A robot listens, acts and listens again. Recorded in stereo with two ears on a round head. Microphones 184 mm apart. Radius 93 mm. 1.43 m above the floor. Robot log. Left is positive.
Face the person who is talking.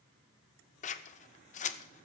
cmd idle
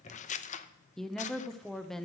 cmd yaw +30
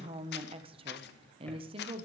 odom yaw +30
note: So it is at 25° right.
cmd yaw -25
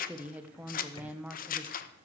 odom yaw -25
end: Found it: a woman speaking, straight ahead, under 1 m away.